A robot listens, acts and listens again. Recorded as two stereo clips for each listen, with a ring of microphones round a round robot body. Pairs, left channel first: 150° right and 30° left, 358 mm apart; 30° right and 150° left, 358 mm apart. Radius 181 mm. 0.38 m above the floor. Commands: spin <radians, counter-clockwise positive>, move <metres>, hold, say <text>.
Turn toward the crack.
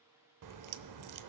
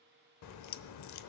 say Found it: a crack, straight ahead, under 1 m away.